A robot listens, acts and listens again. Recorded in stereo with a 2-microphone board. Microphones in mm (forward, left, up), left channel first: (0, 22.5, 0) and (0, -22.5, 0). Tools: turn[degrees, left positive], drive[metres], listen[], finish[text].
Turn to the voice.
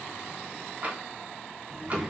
Action: turn[-30]
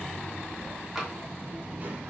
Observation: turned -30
Thought: So it is at 145° right.
Action: turn[-145]
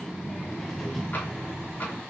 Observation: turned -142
Action: finish[Facing the child speaking, under 1 m away.]